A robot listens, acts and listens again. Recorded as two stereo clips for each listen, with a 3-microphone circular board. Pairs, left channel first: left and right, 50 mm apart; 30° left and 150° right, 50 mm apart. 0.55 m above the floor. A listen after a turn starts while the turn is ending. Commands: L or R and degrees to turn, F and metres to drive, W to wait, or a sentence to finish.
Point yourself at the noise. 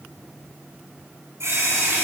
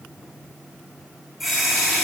R60
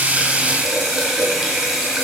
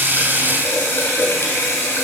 R10
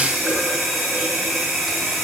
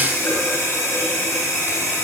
Facing the running tap.